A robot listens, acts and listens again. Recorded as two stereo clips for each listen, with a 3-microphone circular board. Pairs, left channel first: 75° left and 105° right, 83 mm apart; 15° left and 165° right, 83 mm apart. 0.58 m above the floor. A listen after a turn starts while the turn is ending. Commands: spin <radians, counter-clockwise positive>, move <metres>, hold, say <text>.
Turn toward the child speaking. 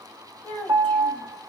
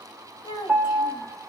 say Found it: a child speaking, straight ahead.